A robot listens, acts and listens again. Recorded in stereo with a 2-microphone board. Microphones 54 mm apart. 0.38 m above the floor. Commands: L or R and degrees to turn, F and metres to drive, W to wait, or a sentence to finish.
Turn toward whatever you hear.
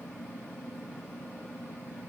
W
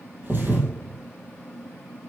R45
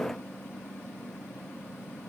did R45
W
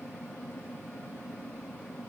I heard a thud, but can't make it out now. It was about straight ahead or 90° right.